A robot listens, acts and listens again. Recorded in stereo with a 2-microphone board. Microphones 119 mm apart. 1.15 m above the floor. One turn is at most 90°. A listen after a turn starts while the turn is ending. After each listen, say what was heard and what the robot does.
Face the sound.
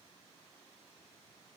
Keep listening.
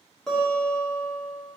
Turn 30° left.
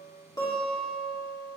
So it is at 145° left. Turn 90° left.
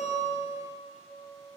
The guitar is now 50° left. Turn 50° left.
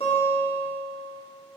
The guitar is now 10° left. Turn 10° left.
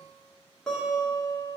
Found it: a guitar, straight ahead, 1 to 2 m away.